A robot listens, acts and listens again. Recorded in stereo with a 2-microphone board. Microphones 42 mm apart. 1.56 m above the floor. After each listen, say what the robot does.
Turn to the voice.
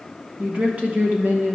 Turn 55° right.
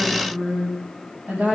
Turn 35° right.
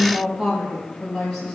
Turn 10° left.
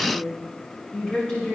Turn 15° left.
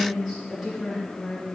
Facing the woman speaking.